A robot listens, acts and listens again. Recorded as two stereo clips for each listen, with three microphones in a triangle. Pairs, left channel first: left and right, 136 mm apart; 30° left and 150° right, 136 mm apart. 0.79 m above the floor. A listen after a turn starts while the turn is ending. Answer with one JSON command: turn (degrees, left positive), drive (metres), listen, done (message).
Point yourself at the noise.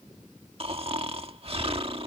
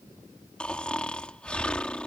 {"turn": -50}
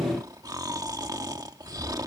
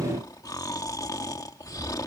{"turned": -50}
{"turn": -30}
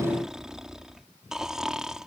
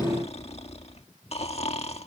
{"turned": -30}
{"done": "Facing the snoring."}